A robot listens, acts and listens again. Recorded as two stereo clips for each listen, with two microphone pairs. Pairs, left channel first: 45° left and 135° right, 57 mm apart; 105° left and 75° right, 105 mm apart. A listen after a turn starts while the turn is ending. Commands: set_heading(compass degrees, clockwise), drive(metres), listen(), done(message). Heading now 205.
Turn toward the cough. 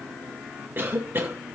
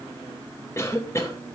set_heading(35)
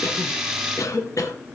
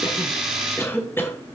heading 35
set_heading(0)
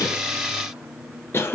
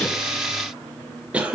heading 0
done("Found it: a cough, straight ahead.")